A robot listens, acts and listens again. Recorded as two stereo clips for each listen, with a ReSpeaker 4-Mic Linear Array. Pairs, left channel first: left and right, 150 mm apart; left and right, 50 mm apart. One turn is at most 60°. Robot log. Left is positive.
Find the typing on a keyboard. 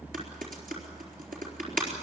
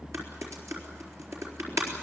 note: The typing on a keyboard: about 70° right or 110° right.
cmd yaw -60
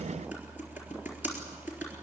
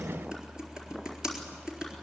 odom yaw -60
note: So it is at 10° right.
cmd yaw -10
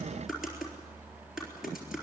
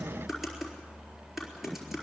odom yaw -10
end: Found it: typing on a keyboard, straight ahead, over 4 m away.